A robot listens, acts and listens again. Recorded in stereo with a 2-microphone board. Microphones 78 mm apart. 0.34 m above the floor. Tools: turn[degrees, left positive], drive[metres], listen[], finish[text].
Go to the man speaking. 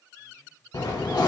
Action: listen[]
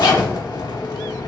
Action: listen[]
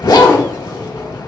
Action: finish[I can't make out a man speaking, only a zipper.]